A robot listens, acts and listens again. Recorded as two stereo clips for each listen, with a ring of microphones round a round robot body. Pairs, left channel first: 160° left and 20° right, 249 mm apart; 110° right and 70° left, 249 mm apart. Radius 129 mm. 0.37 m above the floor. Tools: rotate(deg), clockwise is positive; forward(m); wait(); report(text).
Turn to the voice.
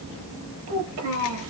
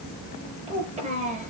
report("Facing the child speaking.")